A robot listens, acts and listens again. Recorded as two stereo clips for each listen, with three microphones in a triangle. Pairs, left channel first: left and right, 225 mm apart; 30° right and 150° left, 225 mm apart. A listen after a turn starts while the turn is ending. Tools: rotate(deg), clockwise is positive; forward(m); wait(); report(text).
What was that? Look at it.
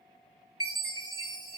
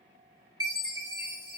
rotate(105)
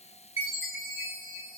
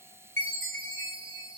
report("Facing the chime.")